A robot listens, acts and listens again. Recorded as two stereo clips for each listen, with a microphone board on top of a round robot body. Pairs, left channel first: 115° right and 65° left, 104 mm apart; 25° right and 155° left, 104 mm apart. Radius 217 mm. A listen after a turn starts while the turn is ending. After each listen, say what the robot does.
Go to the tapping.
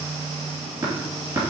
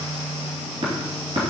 Turn 125° left.
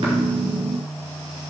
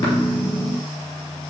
Keep listening.
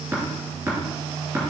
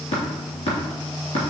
Drive 1.0 m forward.
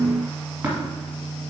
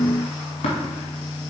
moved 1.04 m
Drive 1.0 m forward.
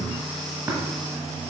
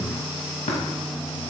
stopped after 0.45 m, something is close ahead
Keep listening.
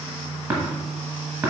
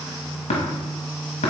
I am next to the tapping.